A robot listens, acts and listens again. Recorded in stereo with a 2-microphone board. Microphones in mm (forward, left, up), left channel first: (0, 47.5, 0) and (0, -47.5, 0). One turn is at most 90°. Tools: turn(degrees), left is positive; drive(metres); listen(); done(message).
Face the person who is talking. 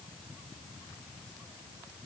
listen()
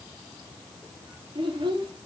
turn(degrees=-65)
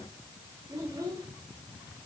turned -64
turn(degrees=-35)
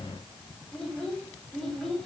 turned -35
done("Facing the child speaking, 2 to 4 m away.")